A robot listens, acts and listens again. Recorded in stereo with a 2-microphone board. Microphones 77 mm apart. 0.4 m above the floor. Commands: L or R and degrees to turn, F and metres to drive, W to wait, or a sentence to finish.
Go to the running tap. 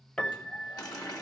L55
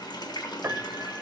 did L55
L70
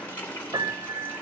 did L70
L20
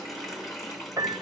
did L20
F1.0
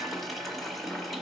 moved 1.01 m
F1.0
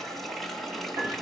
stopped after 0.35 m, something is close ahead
I am next to the running tap.